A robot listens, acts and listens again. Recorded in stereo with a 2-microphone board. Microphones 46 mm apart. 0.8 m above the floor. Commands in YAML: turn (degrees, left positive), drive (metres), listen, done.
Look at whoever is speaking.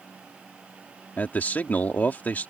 turn: 35
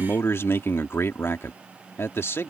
turn: 105
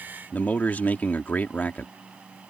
turn: 40
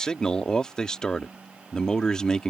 turn: 15
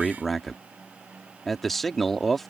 done: "Found it: a man speaking, straight ahead."